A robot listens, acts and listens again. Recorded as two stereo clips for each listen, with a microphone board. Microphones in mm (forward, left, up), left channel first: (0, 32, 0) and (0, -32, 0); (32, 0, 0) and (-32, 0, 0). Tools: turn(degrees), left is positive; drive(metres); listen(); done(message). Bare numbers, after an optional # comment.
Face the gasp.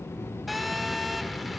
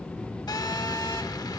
listen()
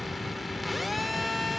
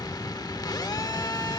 listen()
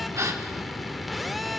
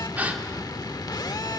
# The gasp: 120° right.
turn(-120)
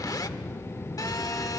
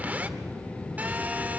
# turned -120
done("I heard a gasp from this way, but can't make it out now.")